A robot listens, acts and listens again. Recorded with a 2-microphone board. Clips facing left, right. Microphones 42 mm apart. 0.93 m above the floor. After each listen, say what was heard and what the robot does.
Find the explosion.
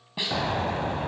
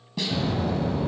The explosion: about 55° left or 125° left. Turn 55° left.
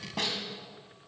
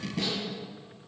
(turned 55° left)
Keep listening.
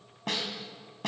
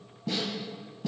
I heard an explosion, but can't make it out now. It was about straight ahead or 70° left.